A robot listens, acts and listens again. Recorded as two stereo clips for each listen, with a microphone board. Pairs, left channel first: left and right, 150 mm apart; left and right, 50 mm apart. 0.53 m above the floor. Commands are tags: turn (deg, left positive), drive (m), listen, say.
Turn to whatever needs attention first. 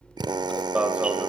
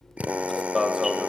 <turn deg="-30"/>
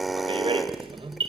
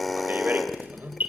<turn deg="-140"/>
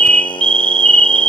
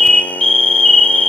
<say>Facing the alarm, 1 to 2 m away.</say>